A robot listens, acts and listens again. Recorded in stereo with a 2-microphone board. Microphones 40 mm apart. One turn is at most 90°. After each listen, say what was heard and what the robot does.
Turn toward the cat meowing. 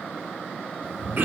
The cat meowing: about 40° right or 140° right. Turn 40° right.
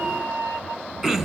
So it is at 115° right. Turn 90° right.
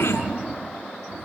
The cat meowing is now 35° right. Turn 35° right.
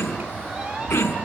The cat meowing is now 15° right. Turn 15° right.
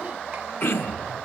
Found it: a cat meowing, straight ahead.